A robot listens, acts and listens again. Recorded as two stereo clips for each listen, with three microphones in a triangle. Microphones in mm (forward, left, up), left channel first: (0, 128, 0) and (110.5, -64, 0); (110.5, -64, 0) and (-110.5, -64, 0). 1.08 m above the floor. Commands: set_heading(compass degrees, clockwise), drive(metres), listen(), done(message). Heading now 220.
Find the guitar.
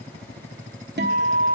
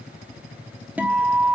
set_heading(315)
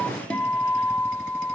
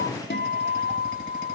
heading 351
set_heading(316)
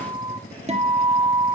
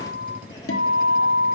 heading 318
done("Facing the guitar.")